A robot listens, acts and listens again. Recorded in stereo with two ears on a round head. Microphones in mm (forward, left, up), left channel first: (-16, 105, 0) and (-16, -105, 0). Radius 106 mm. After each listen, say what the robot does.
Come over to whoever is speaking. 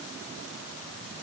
Keep listening.
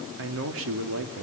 Turn 65° right.
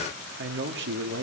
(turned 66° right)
Turn 50° right.
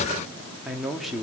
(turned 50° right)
Drive 1.0 m forward.
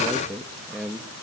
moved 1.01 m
Drive 1.0 m forward.
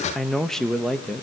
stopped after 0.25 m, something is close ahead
Arrived at the man speaking, straight ahead.